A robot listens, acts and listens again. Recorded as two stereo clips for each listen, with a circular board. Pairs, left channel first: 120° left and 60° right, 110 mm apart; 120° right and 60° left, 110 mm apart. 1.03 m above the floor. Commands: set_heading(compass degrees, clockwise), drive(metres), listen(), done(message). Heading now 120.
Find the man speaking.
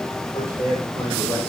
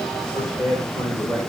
set_heading(330)
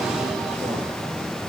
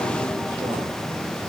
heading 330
listen()
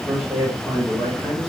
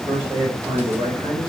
set_heading(310)
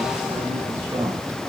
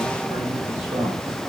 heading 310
listen()
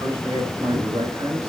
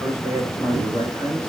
done("Facing the man speaking, over 4 m away.")